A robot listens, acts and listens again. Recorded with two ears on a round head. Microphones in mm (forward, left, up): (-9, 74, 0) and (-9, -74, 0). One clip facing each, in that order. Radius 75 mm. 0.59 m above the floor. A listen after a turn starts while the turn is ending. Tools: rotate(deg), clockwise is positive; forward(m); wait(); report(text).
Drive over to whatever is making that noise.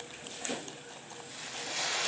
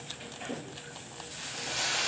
rotate(-30)
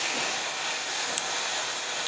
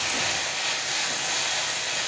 rotate(20)
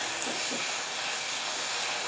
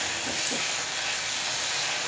rotate(10)
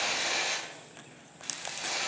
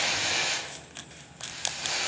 forward(1.0)
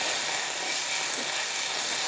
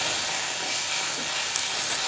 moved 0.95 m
rotate(-10)
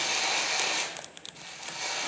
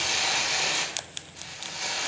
forward(1.0)
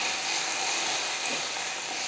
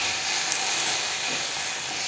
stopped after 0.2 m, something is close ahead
report("Arrived at the frying, straight ahead.")